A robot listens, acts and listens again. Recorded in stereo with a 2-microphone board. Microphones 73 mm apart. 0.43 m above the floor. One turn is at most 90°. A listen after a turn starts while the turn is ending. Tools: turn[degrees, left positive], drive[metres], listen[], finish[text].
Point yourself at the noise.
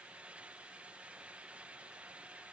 Action: listen[]
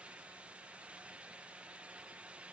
Action: listen[]
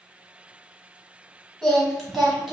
Action: turn[30]
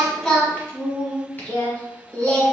Thought: So it is at 155° left.
Action: turn[90]
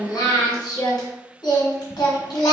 Thought: The singing is now 75° left.
Action: turn[75]
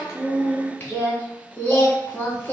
Thought: The singing is now 20° left.
Action: turn[20]
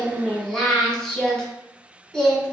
Action: finish[Facing the singing.]